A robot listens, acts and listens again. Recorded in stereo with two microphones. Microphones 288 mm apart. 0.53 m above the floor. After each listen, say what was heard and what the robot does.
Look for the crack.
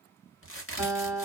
The crack: about 45° left or 135° left. Turn 45° left.
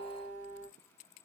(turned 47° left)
Keep listening.
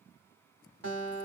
I heard a crack, but can't make it out now. It was about straight ahead or 85° left.